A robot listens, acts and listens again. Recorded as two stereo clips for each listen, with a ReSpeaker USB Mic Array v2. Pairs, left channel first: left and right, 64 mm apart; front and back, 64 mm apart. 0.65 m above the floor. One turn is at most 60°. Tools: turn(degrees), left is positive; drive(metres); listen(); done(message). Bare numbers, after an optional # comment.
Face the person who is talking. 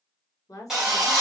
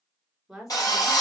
# The woman speaking: 100° left.
turn(60)
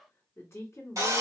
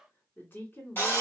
# The woman speaking is now 50° left.
turn(50)
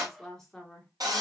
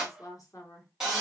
# The woman speaking is now 10° left.
turn(10)
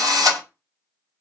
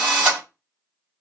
listen()
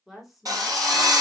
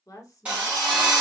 done("Found it: a woman speaking, straight ahead, 1 to 2 m away.")